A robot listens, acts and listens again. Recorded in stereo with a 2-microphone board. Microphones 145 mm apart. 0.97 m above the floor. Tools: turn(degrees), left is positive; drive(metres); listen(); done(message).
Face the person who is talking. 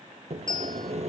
listen()
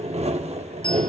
listen()
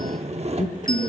turn(degrees=60)
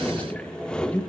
turn(degrees=10)
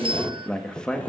done("Facing the man speaking, 1 to 2 m away.")